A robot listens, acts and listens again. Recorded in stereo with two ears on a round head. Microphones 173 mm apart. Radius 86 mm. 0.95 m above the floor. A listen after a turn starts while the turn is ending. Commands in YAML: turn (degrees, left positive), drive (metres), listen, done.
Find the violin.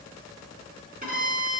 turn: -45
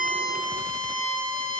done: "Facing the violin, 2 to 4 m away."